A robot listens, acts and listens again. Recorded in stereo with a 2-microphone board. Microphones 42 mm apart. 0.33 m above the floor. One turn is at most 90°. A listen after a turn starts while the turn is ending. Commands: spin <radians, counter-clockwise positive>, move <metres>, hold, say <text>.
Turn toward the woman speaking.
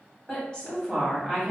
spin 0.52
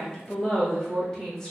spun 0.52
spin 0.52
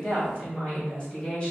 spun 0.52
spin 0.35
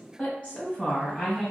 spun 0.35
spin 1.57
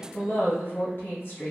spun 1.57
spin 1.05
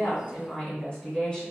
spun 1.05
spin 0.17
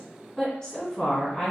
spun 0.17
say Facing the woman speaking, 2 to 4 m away.